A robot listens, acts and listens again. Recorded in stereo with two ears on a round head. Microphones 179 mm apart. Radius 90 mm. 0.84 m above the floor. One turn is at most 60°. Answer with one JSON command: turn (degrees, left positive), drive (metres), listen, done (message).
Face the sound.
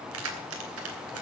{"turn": -60}
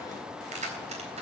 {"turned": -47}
{"turn": -35}
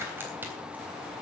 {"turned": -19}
{"turn": -10}
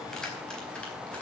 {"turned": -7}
{"done": "Found it: keys jangling, straight ahead, 2 to 4 m away."}